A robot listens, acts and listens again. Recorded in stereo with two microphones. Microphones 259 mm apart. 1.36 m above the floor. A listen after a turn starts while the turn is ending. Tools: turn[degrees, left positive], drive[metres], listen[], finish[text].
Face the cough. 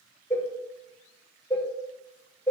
Action: listen[]
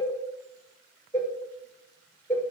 Action: listen[]
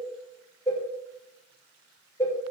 Action: finish[I can't make out a cough, only a cowbell.]